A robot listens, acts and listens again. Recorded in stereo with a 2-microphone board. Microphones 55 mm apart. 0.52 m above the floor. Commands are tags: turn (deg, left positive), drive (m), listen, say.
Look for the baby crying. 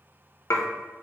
<listen/>
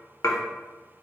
<listen/>
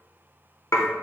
<say>I can't make out a baby crying to turn to.</say>